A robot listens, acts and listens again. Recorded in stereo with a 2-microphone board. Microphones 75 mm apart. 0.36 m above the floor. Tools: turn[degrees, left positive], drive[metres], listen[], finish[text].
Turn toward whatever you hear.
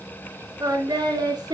Thought: The singing: about 65° right or 115° right.
Action: turn[-65]
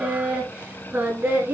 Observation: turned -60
Thought: So it is at 30° right.
Action: turn[-30]
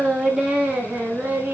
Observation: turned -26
Thought: The singing is now 25° right.
Action: turn[-25]
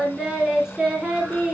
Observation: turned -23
Thought: The singing is now 10° right.
Action: turn[-10]
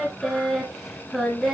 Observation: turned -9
Action: finish[Found it: singing, straight ahead.]